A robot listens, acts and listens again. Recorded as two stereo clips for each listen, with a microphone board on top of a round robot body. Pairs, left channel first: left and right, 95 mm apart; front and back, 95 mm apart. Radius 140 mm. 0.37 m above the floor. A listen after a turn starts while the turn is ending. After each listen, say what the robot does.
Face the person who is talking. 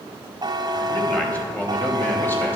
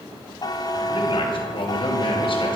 Turn 20° left.
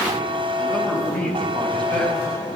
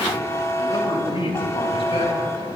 Turn 15° left.
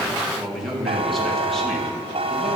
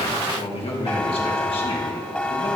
Found it: a man speaking, straight ahead, over 4 m away.